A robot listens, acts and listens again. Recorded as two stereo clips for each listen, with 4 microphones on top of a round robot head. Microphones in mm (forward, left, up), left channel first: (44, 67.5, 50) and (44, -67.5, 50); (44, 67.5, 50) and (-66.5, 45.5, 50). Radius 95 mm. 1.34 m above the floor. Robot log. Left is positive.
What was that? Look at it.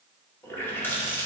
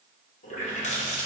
note: The running tap: 15° left.
cmd yaw +15
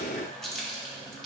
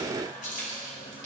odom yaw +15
end: Found it: a running tap, straight ahead, 2 to 4 m away.